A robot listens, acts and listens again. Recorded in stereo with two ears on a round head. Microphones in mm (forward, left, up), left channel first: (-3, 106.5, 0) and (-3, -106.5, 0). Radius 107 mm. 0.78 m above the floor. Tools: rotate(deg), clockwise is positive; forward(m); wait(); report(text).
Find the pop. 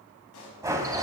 rotate(-70)
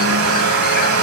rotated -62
wait()
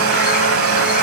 report("I heard a pop, but can't make it out now. It was about 10° left or 45° left.")